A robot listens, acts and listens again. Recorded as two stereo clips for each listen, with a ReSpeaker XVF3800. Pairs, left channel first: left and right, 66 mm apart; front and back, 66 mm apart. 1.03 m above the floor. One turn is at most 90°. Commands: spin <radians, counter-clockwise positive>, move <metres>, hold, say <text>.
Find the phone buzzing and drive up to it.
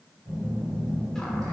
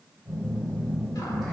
spin -1.40
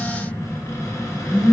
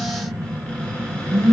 spin -0.35
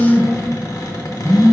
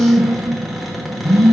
move 1.0
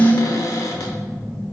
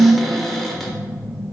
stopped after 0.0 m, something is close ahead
say Something is in my way. I am facing the phone buzzing but have not reached it.